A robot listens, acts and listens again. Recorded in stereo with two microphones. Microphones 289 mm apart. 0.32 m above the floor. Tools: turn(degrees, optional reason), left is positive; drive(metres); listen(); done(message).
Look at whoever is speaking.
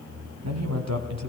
turn(degrees=-65, reason="The man speaking: about 65° right or 115° right.")
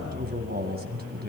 turn(degrees=-35, reason="So it is at 35° right.")
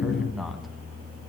done("Found it: a man speaking, straight ahead, 2 to 4 m away.")